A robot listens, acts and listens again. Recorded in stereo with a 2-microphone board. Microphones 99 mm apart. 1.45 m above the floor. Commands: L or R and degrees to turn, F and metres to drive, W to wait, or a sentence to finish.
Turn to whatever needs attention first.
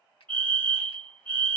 L30
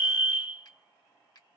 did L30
R15
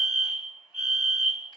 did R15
Found it: a fire alarm, straight ahead.